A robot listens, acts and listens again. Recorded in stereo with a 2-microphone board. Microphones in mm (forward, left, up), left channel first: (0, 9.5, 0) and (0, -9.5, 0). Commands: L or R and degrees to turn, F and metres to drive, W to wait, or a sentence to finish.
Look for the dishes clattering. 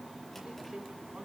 W
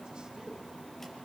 W
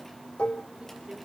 L70
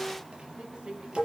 Found it: dishes clattering, straight ahead, 1 to 2 m away.